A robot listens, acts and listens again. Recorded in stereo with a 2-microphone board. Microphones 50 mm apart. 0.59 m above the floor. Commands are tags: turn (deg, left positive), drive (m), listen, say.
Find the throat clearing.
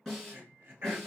<turn deg="-45"/>
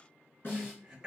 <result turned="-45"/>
<turn deg="-10"/>
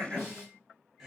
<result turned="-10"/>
<say>Facing the throat clearing.</say>